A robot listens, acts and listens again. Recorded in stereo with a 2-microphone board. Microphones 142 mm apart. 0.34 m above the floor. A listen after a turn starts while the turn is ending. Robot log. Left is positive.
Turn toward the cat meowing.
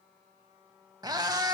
note: The cat meowing: about 30° right or 150° right.
cmd yaw -30
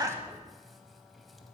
cmd idle
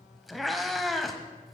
end: Facing the cat meowing.